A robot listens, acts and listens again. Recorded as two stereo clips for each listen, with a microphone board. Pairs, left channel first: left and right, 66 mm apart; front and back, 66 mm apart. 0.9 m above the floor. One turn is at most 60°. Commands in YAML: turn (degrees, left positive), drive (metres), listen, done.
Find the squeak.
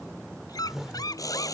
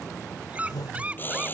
turn: 60
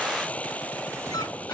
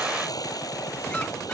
turn: 50
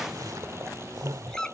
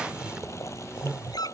turn: 10
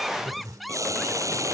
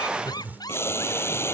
done: "Facing the squeak."